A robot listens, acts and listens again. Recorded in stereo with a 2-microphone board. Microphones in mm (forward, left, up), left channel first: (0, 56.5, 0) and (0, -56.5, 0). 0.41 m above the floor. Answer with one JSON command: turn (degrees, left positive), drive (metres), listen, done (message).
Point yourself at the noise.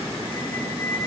{"turn": 15}
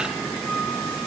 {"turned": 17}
{"done": "Found it: a squeak, straight ahead, 1 to 2 m away."}